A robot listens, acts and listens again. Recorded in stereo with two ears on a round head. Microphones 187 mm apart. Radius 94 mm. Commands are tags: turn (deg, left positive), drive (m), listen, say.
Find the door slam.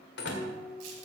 <turn deg="60"/>
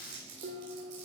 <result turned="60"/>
<listen/>
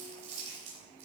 <say>I heard a door slam, but can't make it out now. It was about straight ahead or 60° left.</say>